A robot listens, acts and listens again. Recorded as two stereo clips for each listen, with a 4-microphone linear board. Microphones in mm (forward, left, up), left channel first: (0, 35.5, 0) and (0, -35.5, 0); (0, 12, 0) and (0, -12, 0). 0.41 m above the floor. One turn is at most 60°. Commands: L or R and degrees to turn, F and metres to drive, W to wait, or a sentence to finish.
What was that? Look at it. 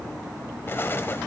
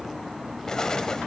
L35
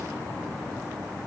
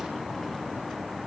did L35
W
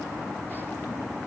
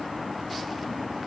I heard an explosion, but can't make it out now. It was about straight ahead or 110° left.